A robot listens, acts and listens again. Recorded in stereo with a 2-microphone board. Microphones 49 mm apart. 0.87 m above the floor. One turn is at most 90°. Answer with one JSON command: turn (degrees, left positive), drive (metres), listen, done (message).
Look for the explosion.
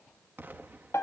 {"turn": -45}
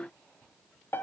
{"listen": true}
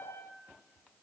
{"done": "I heard an explosion, but can't make it out now. It was about straight ahead or 90° right."}